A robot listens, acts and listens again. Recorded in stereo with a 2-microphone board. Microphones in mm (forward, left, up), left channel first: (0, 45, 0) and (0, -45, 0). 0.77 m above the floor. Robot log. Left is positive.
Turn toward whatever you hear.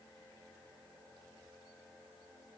cmd idle
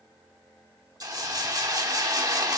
note: The hiss: about 40° right or 140° right.
cmd yaw -40
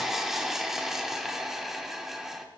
end: Facing the hiss, 1 to 2 m away.